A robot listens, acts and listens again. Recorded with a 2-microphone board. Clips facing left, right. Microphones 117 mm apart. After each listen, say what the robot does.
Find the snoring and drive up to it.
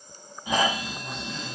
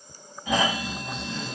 Turn 15° left.
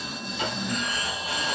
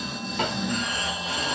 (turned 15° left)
Drive 1.0 m forward.
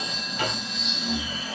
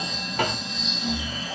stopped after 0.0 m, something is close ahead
Something is in my way. I am facing the snoring but have not reached it.